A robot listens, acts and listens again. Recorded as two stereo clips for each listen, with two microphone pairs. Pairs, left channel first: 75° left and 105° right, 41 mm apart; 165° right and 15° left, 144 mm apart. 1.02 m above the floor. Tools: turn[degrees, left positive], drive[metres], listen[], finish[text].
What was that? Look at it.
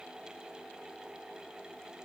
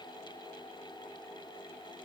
Action: listen[]
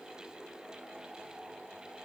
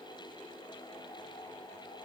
Action: listen[]
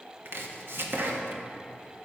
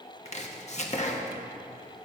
Thought: The chopping: 130° right.
Action: turn[-130]
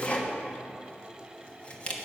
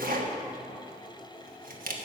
Thought: The chopping is now 15° left.
Action: turn[15]
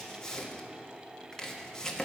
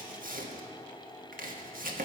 Action: finish[Facing the chopping.]